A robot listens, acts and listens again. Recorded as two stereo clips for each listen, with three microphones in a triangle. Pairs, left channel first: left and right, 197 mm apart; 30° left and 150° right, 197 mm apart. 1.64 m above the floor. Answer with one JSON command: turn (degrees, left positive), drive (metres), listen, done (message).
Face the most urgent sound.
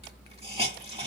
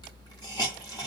{"listen": true}
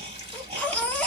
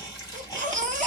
{"turn": 170}
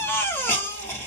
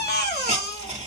{"turn": 15}
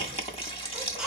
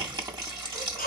{"done": "Facing the baby crying, 1 to 2 m away."}